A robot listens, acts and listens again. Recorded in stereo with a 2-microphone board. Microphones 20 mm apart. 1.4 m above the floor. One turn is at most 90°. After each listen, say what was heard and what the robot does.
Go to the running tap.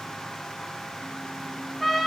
Keep listening.
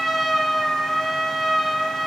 Keep listening.
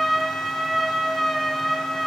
I can't make out a running tap to turn to.